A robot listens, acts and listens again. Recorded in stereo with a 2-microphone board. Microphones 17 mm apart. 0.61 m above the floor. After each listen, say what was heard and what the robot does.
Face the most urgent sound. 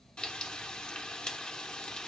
Keep listening.
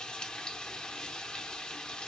Keep listening.
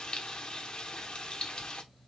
I can't make out anything urgent, only frying.